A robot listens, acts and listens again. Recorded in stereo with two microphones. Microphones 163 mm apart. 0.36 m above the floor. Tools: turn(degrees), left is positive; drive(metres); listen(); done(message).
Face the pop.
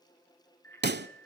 turn(degrees=-90)
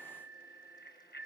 done("I heard a pop from this way, but can't make it out now.")